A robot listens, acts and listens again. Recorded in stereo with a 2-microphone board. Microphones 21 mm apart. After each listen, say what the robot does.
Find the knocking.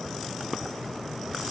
Keep listening.
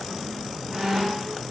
Keep listening.
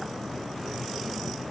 I can't make out knocking, only a squeak.